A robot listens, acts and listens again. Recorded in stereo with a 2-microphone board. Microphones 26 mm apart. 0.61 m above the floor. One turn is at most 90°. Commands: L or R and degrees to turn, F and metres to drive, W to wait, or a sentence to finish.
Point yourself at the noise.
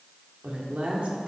R45
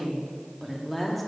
Facing the woman speaking.